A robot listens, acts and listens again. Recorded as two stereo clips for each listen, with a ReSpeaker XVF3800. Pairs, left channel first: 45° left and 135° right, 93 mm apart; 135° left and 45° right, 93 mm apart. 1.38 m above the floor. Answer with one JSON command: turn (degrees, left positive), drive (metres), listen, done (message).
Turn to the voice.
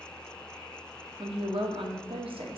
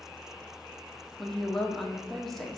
{"turn": -135}
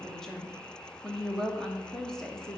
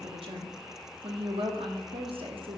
{"turn": -40}
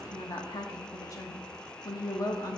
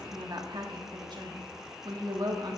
{"done": "Facing the woman speaking."}